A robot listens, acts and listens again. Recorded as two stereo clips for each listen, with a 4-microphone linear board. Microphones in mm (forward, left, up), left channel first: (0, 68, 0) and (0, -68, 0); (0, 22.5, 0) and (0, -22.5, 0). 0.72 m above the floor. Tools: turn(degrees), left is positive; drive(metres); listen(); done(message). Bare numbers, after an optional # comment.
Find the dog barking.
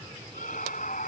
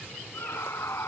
listen()
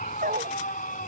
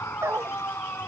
turn(-90)
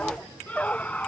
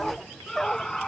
# So it is at 10° left.
turn(10)
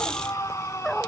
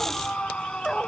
done("Found it: a dog barking, straight ahead.")